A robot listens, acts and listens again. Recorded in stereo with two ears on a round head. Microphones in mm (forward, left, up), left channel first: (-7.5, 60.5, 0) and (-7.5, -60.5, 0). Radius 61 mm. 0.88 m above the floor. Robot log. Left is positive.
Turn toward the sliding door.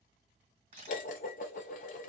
cmd idle
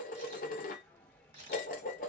cmd yaw +30
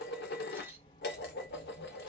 note: So it is at 140° left.
cmd yaw +140
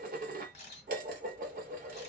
cmd idle
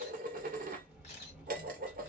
note: The sliding door is now 10° right.
cmd yaw -10
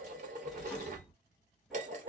end: Found it: a sliding door, straight ahead.